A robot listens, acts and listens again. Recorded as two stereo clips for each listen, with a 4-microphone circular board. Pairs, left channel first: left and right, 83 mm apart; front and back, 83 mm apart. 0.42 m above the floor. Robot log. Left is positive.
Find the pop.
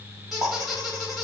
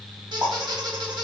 note: The pop: 125° right.
cmd yaw -125
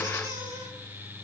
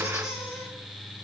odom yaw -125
end: Facing where the pop came from. I can't hear it now.